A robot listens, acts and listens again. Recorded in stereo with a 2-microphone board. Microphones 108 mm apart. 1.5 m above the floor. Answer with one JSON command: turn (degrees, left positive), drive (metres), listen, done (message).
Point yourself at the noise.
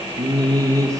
{"turn": -30}
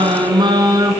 {"turn": -35}
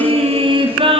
{"turn": -130}
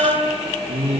{"turn": -70}
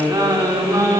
{"turn": -30}
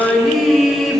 {"done": "Facing the singing, 2 to 4 m away."}